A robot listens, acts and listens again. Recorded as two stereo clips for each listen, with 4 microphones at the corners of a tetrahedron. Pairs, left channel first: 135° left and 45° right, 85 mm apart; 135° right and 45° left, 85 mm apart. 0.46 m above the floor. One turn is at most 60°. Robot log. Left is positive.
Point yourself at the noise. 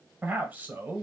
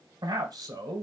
note: The man speaking: 20° left.
cmd yaw +20
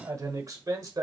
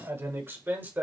note: The man speaking is now 15° right.
cmd yaw -15
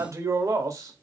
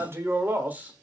note: The man speaking is now 20° right.
cmd yaw -20
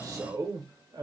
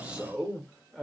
note: The man speaking is now 45° right.
cmd yaw -45
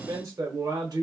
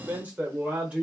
note: The man speaking is now 30° right.
cmd yaw -30
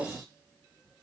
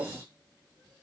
cmd idle
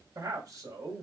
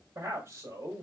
end: Facing the man speaking, 1 to 2 m away.